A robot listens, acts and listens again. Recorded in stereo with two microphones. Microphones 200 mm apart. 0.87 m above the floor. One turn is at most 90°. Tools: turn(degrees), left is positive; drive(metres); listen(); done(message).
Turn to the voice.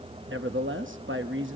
turn(degrees=-70)
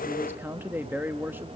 turn(degrees=-10)
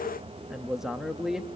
done("Found it: a man speaking, straight ahead, under 1 m away.")